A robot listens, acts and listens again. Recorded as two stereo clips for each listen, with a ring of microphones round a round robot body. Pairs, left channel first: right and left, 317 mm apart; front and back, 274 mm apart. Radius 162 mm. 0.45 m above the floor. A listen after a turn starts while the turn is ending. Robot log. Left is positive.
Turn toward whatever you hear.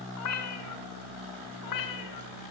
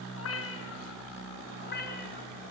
note: The cat meowing: 65° right.
cmd yaw -65
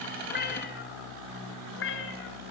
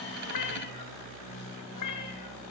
note: The cat meowing is now 35° right.
cmd yaw -35
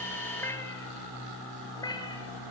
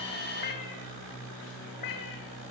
note: The cat meowing is now 10° right.
cmd yaw -10
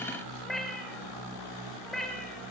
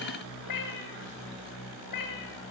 end: Facing the cat meowing.